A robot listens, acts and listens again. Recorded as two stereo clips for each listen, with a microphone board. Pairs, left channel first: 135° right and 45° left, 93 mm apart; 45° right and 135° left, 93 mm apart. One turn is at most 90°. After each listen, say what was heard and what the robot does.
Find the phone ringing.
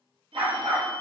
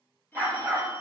The phone ringing: 25° left. Turn 25° left.
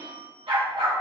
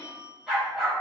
The phone ringing is now 15° left. Turn 15° left.
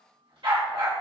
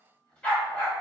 Keep listening.
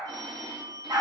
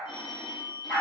Found it: a phone ringing, straight ahead.